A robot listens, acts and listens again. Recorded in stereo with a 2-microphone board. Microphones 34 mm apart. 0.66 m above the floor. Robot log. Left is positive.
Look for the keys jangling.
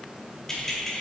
note: The keys jangling: about 15° left or 165° left.
cmd yaw +15
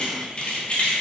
note: The keys jangling: about 35° left or 145° left.
cmd yaw +35
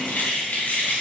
note: So it is at 110° left.
cmd yaw +110
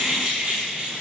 note: The keys jangling is now 20° right.
cmd yaw -20
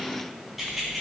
end: Found it: keys jangling, straight ahead, over 4 m away.